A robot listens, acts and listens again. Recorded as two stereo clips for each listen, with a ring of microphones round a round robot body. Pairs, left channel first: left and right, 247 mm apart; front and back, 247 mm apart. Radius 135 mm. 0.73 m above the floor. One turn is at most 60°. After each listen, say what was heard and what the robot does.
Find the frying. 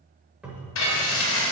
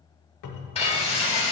The frying: 65° left. Turn 60° left.
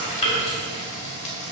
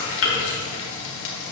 The frying is now 30° left. Turn 30° left.
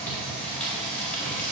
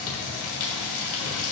Facing the frying, 1 to 2 m away.